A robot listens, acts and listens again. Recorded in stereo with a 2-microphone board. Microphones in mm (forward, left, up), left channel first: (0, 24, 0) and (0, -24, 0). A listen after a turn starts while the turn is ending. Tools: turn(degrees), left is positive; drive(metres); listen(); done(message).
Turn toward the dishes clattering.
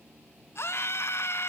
listen()
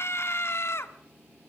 listen()
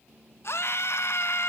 done("I can't make out dishes clattering, only a scream.")